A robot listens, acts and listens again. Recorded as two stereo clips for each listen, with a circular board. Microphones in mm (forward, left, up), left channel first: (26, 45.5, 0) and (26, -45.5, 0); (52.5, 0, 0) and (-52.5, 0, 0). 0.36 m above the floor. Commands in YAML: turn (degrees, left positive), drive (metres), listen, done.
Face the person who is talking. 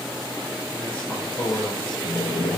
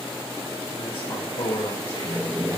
turn: 15
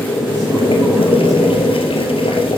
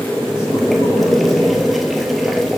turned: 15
listen: true
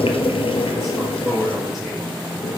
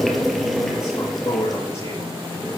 done: "Found it: a man speaking, straight ahead, over 4 m away."